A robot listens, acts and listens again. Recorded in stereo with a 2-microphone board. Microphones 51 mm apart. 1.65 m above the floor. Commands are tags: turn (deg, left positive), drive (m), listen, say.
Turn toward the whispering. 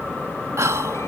<turn deg="-90"/>
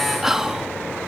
<turn deg="-10"/>
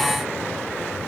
<listen/>
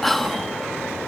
<say>Found it: whispering, straight ahead.</say>